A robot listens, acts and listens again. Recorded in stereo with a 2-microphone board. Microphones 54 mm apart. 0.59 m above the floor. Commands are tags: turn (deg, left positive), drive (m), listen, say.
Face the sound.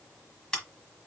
<turn deg="30"/>
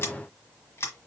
<turn deg="130"/>
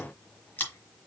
<turn deg="35"/>
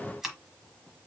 <say>Facing the scissors, 1 to 2 m away.</say>